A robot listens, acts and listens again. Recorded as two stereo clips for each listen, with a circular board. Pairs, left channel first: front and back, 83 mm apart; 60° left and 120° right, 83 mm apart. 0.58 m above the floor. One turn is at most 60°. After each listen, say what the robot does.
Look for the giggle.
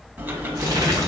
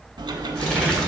Keep listening.
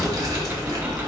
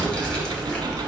Keep listening.
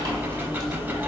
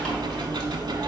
I can't make out a giggle to turn to.